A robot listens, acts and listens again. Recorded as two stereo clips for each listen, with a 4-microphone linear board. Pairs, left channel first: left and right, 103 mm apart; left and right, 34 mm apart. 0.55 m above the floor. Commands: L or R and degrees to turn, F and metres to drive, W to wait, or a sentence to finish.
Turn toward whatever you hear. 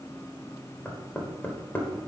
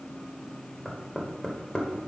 L20
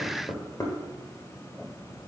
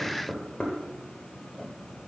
L145
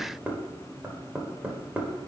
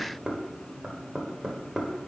R15
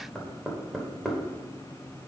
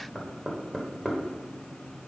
Found it: knocking, straight ahead, 1 to 2 m away.